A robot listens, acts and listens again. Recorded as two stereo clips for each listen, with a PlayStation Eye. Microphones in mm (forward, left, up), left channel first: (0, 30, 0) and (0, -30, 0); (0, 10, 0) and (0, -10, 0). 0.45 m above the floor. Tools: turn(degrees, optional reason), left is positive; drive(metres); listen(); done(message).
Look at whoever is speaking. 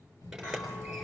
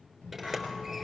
turn(degrees=90)
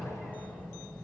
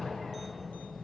turn(degrees=10, reason="So it is at 10° left.")
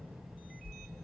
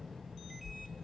done("Found it: a child speaking, straight ahead, over 4 m away.")